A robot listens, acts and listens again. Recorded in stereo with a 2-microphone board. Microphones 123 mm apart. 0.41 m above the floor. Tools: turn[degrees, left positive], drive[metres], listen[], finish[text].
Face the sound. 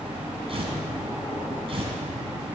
Thought: The tearing paper: about 50° right or 130° right.
Action: turn[-50]
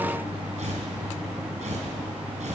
Thought: So it is at 80° right.
Action: turn[-80]
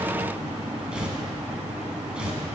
Thought: The tearing paper is now 10° right.
Action: turn[-10]
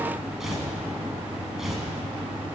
Action: finish[Found it: tearing paper, straight ahead.]